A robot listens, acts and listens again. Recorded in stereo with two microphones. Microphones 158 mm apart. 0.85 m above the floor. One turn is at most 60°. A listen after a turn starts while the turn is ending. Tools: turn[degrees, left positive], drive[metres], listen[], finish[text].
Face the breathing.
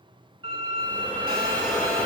Action: turn[30]
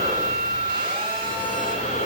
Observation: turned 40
Thought: So it is at 135° left.
Action: turn[60]
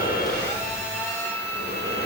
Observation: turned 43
Thought: The breathing is now 90° left.
Action: turn[60]
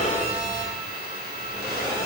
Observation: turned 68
Thought: The breathing is now 20° left.
Action: turn[20]
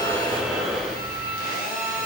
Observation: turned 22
Action: finish[Found it: breathing, straight ahead.]